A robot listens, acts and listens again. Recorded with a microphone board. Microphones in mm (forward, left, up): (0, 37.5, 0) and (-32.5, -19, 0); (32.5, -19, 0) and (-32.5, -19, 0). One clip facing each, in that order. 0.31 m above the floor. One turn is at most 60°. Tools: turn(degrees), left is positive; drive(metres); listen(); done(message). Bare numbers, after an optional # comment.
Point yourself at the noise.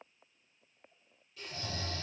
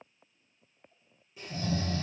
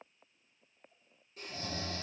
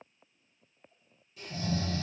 # The snoring: 55° right.
turn(-55)
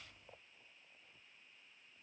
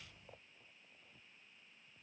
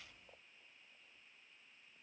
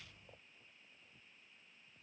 listen()
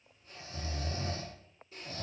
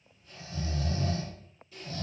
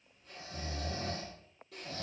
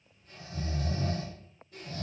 done("Facing the snoring, 1 to 2 m away.")